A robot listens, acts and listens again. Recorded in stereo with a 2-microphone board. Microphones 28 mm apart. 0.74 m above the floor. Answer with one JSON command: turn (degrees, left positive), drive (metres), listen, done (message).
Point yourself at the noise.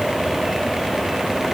{"listen": true}
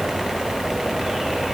{"listen": true}
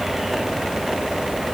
{"done": "I can't make out anything to turn to."}